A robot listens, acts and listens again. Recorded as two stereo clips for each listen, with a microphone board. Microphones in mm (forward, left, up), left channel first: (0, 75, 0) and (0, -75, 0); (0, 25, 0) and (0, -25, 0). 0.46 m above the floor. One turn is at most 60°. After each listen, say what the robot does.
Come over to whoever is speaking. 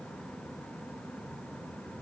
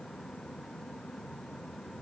Keep listening.
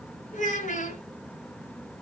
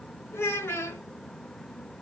Turn 60° left.
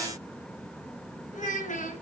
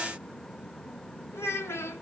Turn 60° left.
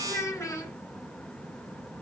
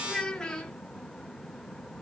Turn 20° left.
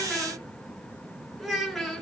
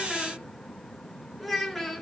Drive 1.0 m forward.
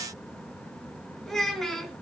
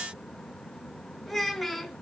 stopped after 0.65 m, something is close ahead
Blocked. The child speaking is further on, straight ahead.